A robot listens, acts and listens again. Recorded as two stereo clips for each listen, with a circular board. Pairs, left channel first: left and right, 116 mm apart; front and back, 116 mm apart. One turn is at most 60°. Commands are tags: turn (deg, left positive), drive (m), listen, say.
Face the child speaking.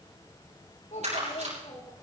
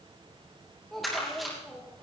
<turn deg="60"/>
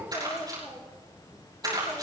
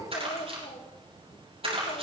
<turn deg="25"/>
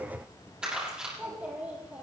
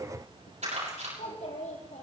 <turn deg="-15"/>
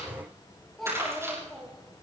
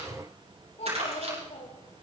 <say>Facing the child speaking, over 4 m away.</say>